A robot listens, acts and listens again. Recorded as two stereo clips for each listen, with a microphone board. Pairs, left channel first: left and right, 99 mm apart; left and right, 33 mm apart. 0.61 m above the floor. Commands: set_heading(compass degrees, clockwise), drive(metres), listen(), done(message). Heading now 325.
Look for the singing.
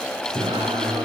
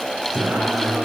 set_heading(20)
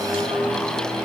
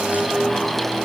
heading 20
set_heading(95)
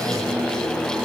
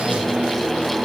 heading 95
set_heading(130)
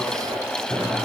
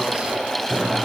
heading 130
set_heading(120)
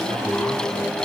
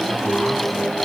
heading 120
done("Found it: singing, straight ahead.")